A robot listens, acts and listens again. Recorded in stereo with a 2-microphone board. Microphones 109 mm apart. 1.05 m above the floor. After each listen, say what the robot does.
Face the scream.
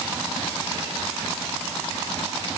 Keep listening.
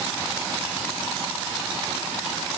Keep listening.
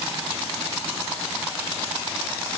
I can't make out a scream to turn to.